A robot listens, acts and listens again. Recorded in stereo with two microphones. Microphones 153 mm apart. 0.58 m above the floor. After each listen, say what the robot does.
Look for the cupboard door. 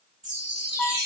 Keep listening.
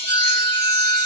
Keep listening.
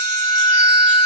I can't make out a cupboard door to turn to.